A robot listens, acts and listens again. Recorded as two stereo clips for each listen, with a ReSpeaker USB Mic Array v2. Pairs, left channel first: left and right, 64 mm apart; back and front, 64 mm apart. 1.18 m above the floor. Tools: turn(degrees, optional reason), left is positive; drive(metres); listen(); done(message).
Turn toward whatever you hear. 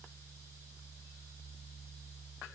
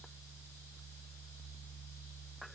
listen()
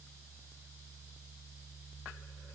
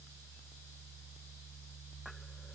listen()
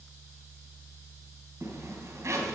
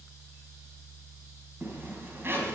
turn(degrees=-55, reason="The zipper: 55° right.")
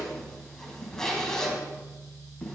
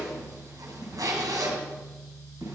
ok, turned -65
turn(degrees=10, reason="The zipper is now 10° left.")
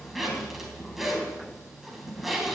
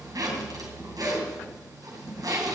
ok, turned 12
done("Found it: a zipper, straight ahead.")